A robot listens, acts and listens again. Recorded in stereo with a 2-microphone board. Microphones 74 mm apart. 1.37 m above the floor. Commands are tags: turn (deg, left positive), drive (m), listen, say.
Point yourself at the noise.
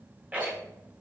<turn deg="-20"/>
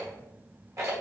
<turn deg="-140"/>
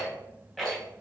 <say>Found it: a rattle, straight ahead.</say>